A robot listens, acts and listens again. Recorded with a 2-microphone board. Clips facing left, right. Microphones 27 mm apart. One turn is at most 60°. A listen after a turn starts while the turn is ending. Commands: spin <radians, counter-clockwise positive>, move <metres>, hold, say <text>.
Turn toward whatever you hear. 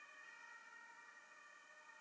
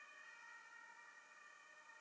hold
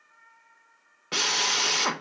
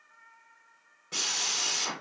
spin 0.87
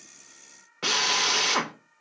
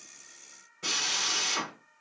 spin 1.05
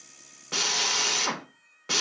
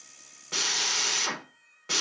spin 0.26
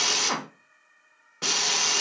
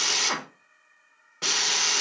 say Facing the drill, under 1 m away.